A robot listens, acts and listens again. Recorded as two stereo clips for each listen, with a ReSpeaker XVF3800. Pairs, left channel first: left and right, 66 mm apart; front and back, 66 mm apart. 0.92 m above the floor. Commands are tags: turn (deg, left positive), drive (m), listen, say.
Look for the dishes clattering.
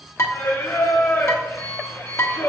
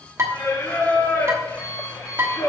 <turn deg="130"/>
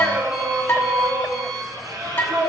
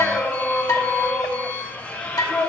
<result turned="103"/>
<turn deg="30"/>
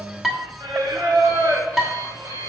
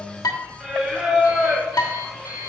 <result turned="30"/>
<say>Facing the dishes clattering, 1 to 2 m away.</say>